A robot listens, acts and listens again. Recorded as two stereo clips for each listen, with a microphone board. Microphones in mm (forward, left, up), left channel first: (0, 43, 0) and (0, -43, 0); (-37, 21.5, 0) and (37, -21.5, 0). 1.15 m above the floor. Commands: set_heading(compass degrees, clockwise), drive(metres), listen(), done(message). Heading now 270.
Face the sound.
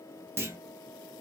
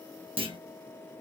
set_heading(300)
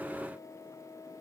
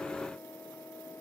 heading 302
done("I heard a clunk from this way, but can't make it out now.")